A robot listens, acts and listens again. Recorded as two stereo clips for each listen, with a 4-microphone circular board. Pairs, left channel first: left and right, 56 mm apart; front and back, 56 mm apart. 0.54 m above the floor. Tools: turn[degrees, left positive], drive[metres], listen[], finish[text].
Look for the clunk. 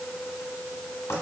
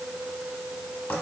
Action: listen[]
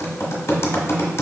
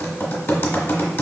Action: listen[]
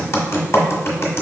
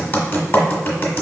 Action: finish[I can't make out a clunk, only typing on a keyboard.]